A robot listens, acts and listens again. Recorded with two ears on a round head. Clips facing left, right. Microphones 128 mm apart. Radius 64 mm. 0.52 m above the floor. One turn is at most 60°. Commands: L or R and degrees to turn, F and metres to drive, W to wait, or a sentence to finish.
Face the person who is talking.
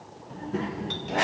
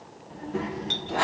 L45
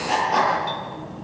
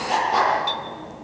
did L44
L60
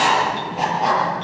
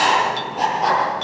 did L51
L40
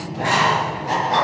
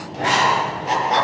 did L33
Facing the child speaking, over 4 m away.